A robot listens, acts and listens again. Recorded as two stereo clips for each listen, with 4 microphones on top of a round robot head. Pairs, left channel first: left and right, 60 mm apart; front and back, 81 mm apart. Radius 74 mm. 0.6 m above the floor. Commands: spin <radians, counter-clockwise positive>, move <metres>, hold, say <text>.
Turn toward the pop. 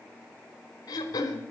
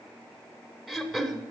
hold
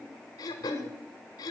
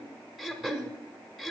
hold
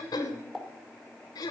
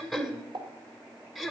spin 3.14
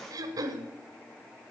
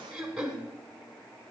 say Facing where the pop came from. I can't hear it now.